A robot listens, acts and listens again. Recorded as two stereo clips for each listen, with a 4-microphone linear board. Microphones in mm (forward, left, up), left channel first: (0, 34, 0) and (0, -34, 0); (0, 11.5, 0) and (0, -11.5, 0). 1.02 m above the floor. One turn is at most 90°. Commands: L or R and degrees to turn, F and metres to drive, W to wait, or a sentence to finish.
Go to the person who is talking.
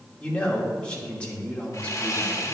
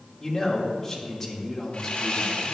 L15
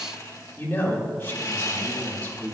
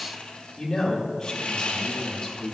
L90
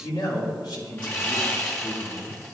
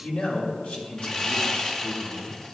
L85
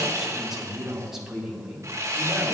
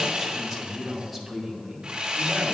F1.0
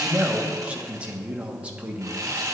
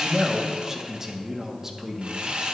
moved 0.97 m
R20
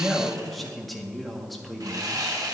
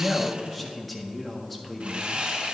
F1.0
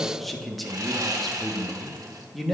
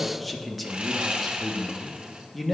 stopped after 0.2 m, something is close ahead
Arrived at the man speaking, straight ahead.